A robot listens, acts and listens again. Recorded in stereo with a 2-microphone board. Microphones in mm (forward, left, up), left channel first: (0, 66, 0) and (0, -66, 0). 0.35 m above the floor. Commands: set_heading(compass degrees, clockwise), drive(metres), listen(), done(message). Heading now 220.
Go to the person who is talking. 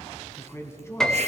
set_heading(200)
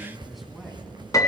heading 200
listen()
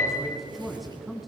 drive(1.0)
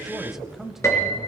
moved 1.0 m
drive(1.0)
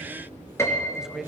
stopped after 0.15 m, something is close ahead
done("I am next to the man speaking.")